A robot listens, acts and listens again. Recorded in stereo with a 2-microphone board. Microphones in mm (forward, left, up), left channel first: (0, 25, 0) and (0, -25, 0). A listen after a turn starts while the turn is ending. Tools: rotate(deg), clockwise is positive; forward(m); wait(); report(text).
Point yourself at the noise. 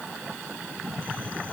wait()
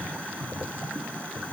wait()
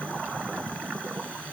report("I can't make out anything to turn to.")